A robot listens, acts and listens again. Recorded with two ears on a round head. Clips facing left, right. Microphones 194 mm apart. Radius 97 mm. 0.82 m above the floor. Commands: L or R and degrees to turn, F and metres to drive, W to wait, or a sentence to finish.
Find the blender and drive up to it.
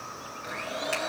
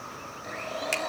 L30
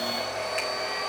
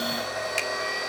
R20
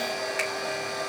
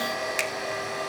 F1.0
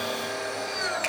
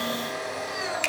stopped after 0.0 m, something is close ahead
Something is in my way. I am facing the blender but have not reached it.